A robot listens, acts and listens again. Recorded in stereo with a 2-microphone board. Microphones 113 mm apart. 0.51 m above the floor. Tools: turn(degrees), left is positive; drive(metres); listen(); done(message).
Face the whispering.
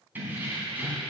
listen()
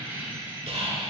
turn(degrees=-65)
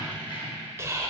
turn(degrees=-30)
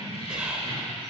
turn(degrees=-10)
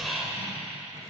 done("Found it: whispering, straight ahead.")